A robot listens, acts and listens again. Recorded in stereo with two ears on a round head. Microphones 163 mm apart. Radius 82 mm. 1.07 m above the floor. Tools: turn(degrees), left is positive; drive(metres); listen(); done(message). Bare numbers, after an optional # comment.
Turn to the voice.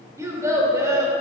# The child speaking: about 15° right or 165° right.
turn(-15)
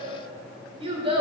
# So it is at 145° right.
turn(-145)
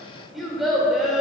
done("Facing the child speaking.")